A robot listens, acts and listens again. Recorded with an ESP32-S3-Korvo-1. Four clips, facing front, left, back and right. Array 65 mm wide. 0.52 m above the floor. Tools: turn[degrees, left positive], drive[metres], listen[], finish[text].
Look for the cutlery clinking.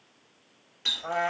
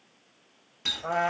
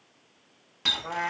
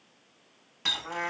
Action: listen[]
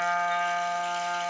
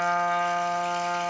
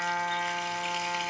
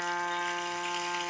Action: listen[]
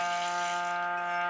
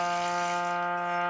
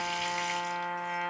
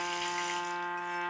Action: finish[I can't make out cutlery clinking to turn to.]